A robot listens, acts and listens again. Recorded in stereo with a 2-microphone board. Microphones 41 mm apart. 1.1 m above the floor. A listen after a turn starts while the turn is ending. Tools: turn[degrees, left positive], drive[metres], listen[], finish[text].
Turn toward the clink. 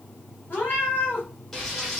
Action: listen[]
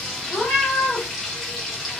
Action: listen[]
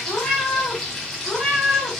Action: finish[I can't make out a clink, only a cat meowing and frying.]